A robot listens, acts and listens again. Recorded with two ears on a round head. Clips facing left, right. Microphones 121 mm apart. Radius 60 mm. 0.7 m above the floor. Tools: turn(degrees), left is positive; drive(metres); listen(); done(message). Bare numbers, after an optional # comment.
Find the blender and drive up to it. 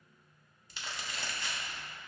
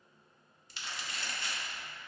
listen()
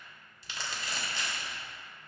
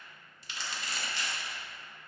listen()
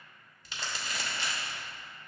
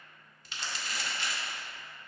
done("I can't make out a blender, only crumpling.")